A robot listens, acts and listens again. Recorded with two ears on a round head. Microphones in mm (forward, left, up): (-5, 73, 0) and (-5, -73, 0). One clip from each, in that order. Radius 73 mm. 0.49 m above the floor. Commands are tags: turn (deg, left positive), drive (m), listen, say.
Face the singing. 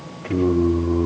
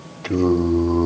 <turn deg="-70"/>
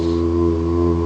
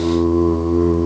<say>Facing the singing.</say>